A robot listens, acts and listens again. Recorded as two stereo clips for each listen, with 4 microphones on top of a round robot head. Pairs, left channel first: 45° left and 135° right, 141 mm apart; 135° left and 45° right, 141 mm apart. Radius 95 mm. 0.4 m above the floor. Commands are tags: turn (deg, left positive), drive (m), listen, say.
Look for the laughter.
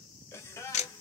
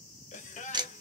<turn deg="115"/>
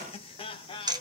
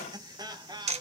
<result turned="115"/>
<say>Found it: laughter, straight ahead, 1 to 2 m away.</say>